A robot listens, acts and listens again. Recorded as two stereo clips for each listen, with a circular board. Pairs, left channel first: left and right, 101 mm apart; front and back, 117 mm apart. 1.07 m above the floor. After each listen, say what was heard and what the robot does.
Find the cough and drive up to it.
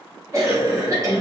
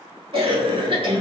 The cough: 145° right. Turn 145° right.
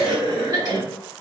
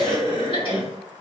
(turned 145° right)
The cough is now 40° right. Turn 40° right.
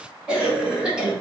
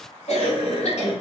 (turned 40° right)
Drive 1.0 m forward.
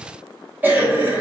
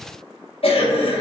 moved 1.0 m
The cough is now 20° right. Turn 20° right.
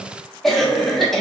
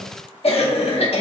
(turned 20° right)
Drive 1.0 m forward.
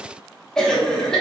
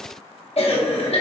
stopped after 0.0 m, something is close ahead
The cough is now 10° left. Turn 10° left.
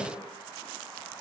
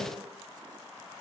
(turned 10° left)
Keep listening.
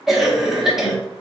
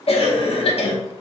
I am next to the cough.